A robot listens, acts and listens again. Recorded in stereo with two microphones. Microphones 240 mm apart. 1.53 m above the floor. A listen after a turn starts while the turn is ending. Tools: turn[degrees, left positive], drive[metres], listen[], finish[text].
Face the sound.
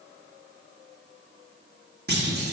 Thought: The clunk: about 45° right or 135° right.
Action: turn[-45]
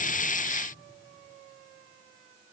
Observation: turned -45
Action: listen[]
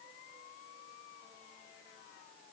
Action: finish[I heard a clunk, but can't make it out now. It was about straight ahead or 90° right.]